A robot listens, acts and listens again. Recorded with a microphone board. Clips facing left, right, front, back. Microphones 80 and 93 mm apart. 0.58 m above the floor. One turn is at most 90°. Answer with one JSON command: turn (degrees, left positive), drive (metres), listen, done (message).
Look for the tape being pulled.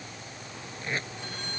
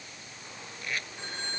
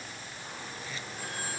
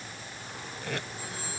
{"turn": 90}
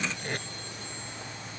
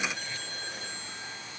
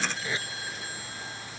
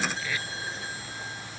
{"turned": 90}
{"turn": 65}
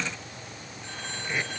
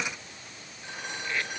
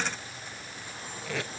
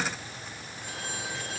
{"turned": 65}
{"turn": 15}
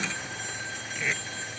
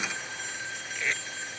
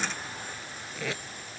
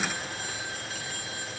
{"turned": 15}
{"done": "Found it: tape being pulled, straight ahead."}